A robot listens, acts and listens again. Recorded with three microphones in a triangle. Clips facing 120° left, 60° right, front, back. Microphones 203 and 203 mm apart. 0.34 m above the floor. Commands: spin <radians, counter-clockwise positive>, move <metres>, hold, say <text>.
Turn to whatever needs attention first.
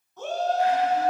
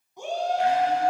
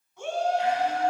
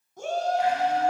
spin -2.36
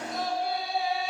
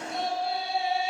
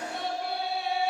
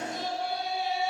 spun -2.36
say Facing the shout.